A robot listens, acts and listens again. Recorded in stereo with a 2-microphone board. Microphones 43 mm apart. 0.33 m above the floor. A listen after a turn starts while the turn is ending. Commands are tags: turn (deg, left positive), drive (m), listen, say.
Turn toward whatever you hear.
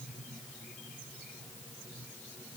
<listen/>
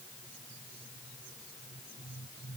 <listen/>
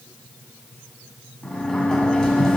<turn deg="15"/>
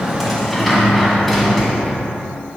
<say>Found it: a sliding door, straight ahead, 1 to 2 m away.</say>